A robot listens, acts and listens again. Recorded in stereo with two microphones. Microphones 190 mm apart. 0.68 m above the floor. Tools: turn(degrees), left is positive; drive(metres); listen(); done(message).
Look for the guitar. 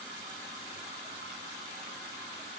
listen()
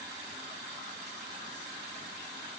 listen()
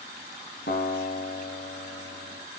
turn(degrees=70)
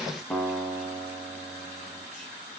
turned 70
done("Found it: a guitar, straight ahead, 1 to 2 m away.")